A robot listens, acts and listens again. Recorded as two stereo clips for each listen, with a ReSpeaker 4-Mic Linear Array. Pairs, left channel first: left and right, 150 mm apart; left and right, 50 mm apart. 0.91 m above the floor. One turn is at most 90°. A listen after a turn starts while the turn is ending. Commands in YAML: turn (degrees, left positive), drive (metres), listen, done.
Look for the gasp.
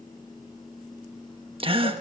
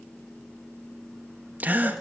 turn: -35
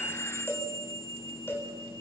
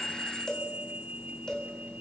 listen: true
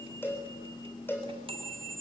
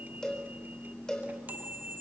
done: "I heard a gasp, but can't make it out now. It was about straight ahead or 110° right."